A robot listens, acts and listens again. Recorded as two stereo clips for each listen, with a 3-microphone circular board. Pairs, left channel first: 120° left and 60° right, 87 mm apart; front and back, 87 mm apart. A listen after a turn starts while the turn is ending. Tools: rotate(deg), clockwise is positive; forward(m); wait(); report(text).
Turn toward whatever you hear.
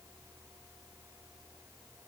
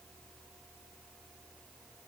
wait()
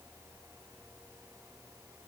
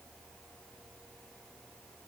wait()
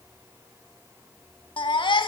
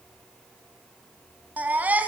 rotate(-110)
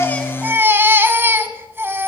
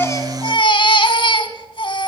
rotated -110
report("Facing the baby crying, 1 to 2 m away.")